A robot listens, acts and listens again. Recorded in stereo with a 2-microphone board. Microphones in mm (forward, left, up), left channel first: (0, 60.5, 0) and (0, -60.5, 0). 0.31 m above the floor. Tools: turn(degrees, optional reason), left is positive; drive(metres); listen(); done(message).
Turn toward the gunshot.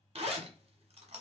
listen()
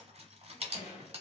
turn(degrees=90)
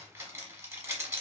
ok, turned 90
done("Facing where the gunshot came from. I can't hear it now.")